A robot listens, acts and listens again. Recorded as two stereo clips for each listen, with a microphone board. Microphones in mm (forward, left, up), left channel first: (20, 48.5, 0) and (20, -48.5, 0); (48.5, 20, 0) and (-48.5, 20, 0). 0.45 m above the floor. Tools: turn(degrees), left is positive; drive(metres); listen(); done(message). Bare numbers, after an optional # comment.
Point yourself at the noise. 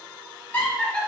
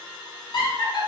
# The laughter: 15° left.
turn(15)
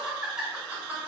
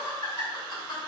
# The laughter is now 20° right.
turn(-20)
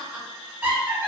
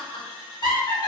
# The laughter is now 30° right.
turn(-30)
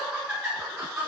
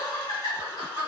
# The laughter is now 20° right.
turn(-20)
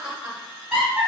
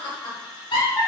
# The laughter is now 10° right.
turn(-10)
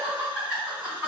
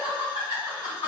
# The laughter is now 10° right.
turn(-10)
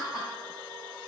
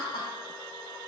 done("Facing the laughter, 2 to 4 m away.")